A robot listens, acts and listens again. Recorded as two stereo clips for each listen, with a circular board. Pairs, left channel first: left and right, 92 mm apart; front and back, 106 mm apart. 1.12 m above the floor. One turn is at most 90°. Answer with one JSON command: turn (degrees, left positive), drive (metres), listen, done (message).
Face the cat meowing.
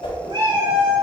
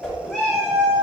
{"turn": -80}
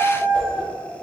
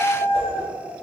{"turn": 20}
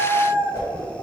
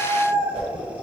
{"turn": 10}
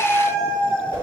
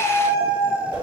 {"turn": 10}
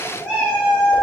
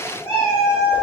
{"done": "Found it: a cat meowing, straight ahead."}